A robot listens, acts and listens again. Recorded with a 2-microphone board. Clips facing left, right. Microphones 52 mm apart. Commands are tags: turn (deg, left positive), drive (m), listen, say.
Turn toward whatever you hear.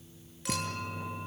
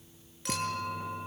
<turn deg="30"/>
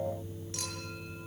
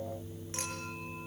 <listen/>
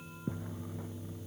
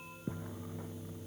<listen/>
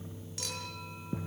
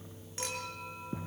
<turn deg="-30"/>
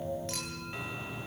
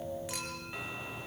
<listen/>
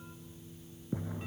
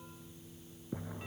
<listen/>
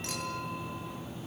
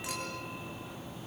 <say>Facing where the clink came from. I can't hear it now.</say>